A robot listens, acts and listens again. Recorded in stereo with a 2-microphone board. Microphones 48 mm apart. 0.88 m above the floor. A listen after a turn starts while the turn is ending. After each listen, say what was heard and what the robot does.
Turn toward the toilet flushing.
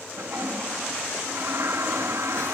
The toilet flushing: about 65° right or 115° right. Turn 65° right.
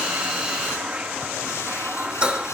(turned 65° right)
So it is at 25° right. Turn 25° right.
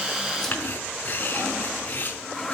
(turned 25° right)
The toilet flushing is now 10° left. Turn 10° left.
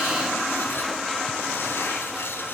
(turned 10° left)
Facing the toilet flushing, 1 to 2 m away.